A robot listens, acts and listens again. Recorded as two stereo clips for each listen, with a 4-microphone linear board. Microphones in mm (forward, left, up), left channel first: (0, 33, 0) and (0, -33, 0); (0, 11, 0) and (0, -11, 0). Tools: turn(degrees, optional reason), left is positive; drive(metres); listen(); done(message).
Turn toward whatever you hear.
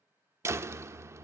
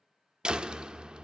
turn(degrees=-45, reason="The door slam: about 45° right or 135° right.")
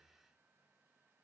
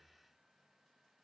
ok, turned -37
listen()
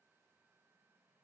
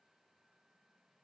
done("I heard a door slam, but can't make it out now. It was about 5° right or 100° right.")